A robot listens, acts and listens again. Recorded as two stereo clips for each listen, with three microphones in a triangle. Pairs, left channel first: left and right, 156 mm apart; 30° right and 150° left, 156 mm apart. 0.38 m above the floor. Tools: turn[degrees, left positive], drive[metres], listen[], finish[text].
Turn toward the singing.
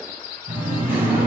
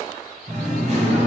Thought: The singing: 170° right.
Action: turn[-170]
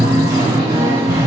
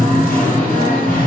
Thought: The singing is now 25° right.
Action: turn[-25]
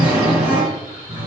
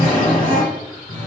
Thought: The singing is now 10° right.
Action: turn[-10]
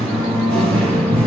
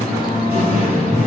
Action: finish[Found it: singing, straight ahead, 1 to 2 m away.]